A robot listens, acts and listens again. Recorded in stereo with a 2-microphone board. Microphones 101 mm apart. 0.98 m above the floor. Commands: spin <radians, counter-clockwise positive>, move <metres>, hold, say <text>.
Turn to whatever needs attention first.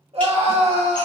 spin -1.31
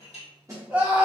spin -0.26
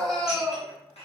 say Facing the scream, 1 to 2 m away.